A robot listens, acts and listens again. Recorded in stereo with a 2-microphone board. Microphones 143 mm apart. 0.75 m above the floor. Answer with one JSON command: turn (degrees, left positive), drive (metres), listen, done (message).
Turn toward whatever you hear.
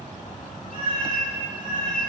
{"turn": 90}
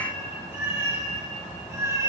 {"turn": -25}
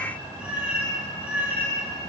{"turn": -15}
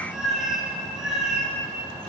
{"done": "Found it: a cat meowing, straight ahead."}